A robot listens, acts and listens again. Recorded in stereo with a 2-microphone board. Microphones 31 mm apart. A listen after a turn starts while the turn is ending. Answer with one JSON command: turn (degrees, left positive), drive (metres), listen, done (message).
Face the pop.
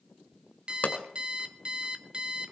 {"turn": 55}
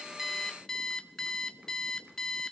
{"listen": true}
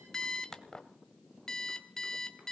{"done": "I heard a pop, but can't make it out now. It was about straight ahead or 70° left."}